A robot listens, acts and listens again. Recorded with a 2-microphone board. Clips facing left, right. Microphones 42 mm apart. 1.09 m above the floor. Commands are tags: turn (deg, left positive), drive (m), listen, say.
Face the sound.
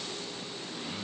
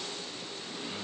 <listen/>
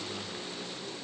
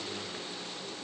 <listen/>
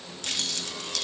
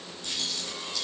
<turn deg="90"/>
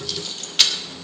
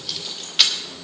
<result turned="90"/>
<say>Found it: keys jangling, straight ahead.</say>